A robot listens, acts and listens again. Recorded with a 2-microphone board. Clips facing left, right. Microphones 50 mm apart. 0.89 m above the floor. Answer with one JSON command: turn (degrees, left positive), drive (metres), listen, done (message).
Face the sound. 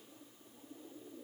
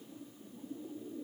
{"listen": true}
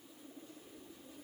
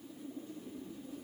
{"listen": true}
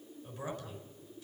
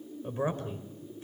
{"turn": -35}
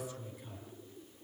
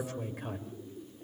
{"turn": -110}
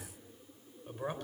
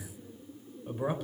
{"done": "Facing the man speaking."}